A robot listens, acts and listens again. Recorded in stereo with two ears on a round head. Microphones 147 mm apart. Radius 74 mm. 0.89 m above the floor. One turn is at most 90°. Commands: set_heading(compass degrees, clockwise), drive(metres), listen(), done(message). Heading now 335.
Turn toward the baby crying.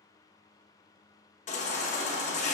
set_heading(290)
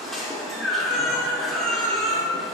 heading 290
done("Facing the baby crying, under 1 m away.")